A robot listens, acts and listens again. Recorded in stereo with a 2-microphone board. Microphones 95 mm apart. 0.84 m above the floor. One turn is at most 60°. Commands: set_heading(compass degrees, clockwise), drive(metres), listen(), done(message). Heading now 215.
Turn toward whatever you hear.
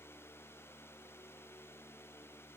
listen()
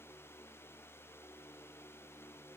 listen()
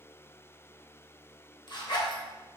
set_heading(165)
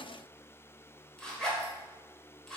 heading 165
set_heading(155)
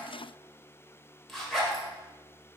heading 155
done("Found it: a zipper, straight ahead, under 1 m away.")